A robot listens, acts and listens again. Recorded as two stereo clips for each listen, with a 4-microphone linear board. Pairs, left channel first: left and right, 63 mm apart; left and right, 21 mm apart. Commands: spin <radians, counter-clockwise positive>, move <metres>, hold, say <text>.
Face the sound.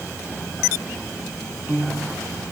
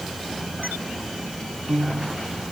spin -0.52
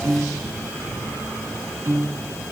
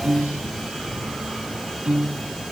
spin -2.09
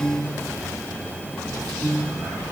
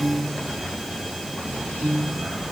spin 0.17
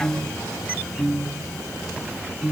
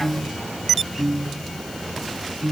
say Found it: a piano, straight ahead, 1 to 2 m away.